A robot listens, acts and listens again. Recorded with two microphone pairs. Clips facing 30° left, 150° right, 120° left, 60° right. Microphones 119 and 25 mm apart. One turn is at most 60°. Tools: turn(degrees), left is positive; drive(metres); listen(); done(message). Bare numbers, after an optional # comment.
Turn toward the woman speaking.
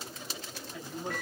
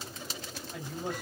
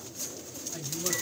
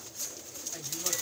# The woman speaking: 130° right.
turn(-60)
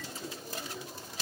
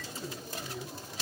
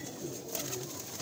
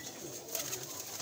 # The woman speaking is now 75° right.
turn(-60)
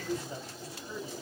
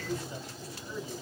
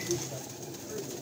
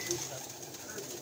# The woman speaking is now 10° right.
turn(-10)
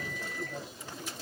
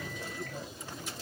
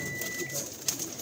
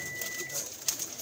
listen()
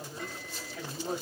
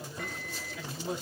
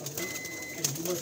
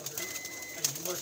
done("Facing the woman speaking, 2 to 4 m away.")